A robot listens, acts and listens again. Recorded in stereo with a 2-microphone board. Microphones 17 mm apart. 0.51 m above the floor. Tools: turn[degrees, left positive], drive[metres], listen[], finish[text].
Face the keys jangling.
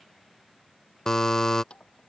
Thought: The keys jangling: about 70° left or 110° left.
Action: turn[70]
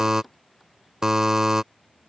Action: finish[Found it: keys jangling, straight ahead.]